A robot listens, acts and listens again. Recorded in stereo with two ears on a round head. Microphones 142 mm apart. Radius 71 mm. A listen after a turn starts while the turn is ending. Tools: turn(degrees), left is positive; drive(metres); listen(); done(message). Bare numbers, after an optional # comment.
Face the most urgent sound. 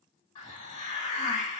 listen()
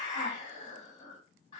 listen()
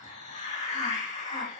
done("I can't make out anything urgent, only a hiss.")